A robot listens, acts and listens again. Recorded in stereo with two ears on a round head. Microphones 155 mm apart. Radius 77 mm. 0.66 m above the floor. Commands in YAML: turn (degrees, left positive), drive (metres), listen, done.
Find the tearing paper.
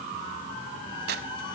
turn: -65
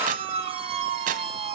turn: -50
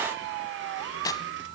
turn: 20
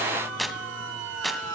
done: "Facing the tearing paper."